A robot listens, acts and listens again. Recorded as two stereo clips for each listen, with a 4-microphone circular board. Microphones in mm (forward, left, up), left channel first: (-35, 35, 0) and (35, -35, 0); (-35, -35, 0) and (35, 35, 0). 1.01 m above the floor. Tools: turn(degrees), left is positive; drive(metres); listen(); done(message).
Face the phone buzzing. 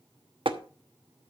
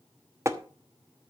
listen()
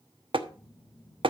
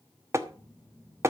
turn(degrees=170)
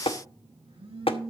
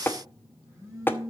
turn(degrees=-15)
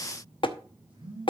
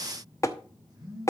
done("Facing the phone buzzing, over 4 m away.")